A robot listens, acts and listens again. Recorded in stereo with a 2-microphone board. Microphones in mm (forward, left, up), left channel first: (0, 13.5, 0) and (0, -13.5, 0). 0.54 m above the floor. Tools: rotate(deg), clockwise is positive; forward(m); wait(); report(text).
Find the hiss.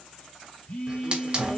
rotate(30)
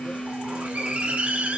rotate(110)
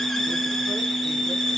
report("Found it: a hiss, straight ahead, 1 to 2 m away.")